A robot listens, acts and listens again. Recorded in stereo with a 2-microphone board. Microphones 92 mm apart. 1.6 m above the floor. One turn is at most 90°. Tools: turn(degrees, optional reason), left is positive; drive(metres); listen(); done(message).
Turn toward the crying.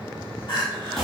turn(degrees=50, reason="The crying: about 50° left or 130° left.")
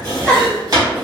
turn(degrees=15, reason="So it is at 15° left.")
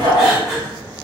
done("Found it: crying, straight ahead.")